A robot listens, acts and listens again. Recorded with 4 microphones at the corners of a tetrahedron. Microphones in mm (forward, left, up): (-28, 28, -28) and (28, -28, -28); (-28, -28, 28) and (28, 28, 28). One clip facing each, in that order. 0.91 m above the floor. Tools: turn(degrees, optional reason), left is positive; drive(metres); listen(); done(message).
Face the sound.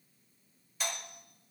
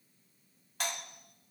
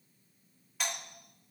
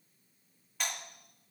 turn(degrees=-50, reason="The doorbell: 50° right.")
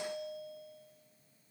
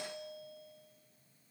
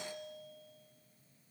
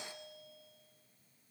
done("Facing the doorbell.")